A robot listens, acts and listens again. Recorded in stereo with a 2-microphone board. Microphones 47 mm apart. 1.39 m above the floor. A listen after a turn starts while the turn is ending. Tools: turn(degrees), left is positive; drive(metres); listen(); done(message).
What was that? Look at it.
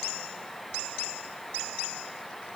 listen()
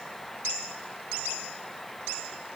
listen()
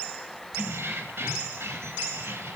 turn(degrees=-70)
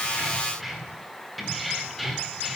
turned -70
done("Found it: keys jangling, straight ahead.")